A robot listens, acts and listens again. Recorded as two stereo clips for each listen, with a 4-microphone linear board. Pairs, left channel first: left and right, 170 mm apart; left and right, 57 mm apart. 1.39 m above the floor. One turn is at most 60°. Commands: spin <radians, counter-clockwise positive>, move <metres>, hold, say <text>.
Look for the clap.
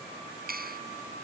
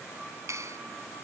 spin -1.05
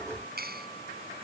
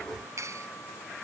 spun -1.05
spin -1.05
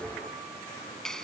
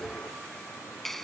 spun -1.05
say Facing the clap.